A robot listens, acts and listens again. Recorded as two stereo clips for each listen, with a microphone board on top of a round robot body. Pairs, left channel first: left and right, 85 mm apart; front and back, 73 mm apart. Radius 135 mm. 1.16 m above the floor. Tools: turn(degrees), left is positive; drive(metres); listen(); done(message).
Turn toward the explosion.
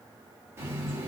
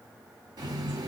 listen()
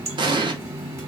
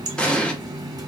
turn(degrees=-75)
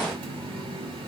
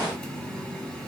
done("Facing where the explosion came from. I can't hear it now.")